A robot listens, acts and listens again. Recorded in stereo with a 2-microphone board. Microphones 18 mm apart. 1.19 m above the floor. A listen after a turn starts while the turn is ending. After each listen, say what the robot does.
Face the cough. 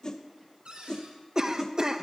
Turn 30° right.
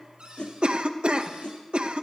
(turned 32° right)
Turn 115° right.
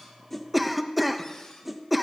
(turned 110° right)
Facing the cough, under 1 m away.